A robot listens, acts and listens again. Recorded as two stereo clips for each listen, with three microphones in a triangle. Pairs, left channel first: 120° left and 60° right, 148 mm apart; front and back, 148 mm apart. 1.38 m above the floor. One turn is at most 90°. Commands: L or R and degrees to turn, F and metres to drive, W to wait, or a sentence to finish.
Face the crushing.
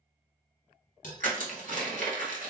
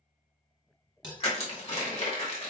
R40
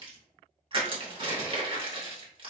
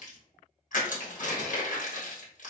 R10
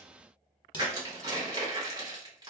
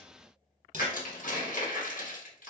Facing the crushing.